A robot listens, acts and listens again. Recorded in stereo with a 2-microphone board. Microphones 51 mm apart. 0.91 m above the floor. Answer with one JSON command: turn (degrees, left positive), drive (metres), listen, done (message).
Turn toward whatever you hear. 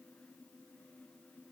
{"listen": true}
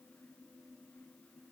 {"listen": true}
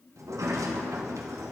{"turn": -90}
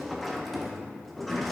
{"done": "Facing the sliding door."}